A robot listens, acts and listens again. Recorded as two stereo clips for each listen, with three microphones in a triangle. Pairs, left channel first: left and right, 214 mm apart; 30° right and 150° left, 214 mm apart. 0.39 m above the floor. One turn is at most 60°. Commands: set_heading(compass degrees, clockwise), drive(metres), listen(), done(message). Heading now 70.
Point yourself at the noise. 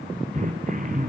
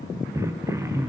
set_heading(130)
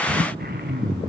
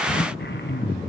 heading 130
set_heading(185)
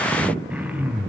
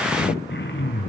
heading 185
done("Found it: throat clearing, straight ahead.")